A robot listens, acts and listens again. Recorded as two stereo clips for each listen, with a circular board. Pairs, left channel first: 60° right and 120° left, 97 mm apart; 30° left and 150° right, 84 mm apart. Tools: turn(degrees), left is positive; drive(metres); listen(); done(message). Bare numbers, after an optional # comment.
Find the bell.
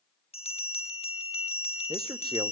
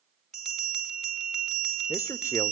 # The bell: 60° right.
turn(-60)
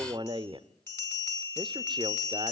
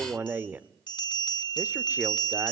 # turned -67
done("Facing the bell.")